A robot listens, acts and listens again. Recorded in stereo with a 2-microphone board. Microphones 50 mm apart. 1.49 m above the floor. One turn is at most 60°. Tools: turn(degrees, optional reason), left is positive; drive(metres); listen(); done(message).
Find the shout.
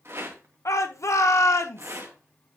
turn(degrees=60)
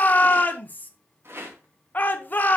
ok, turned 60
turn(degrees=35, reason="So it is at 35° left.")
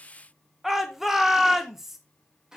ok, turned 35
done("Found it: a shout, straight ahead, 1 to 2 m away.")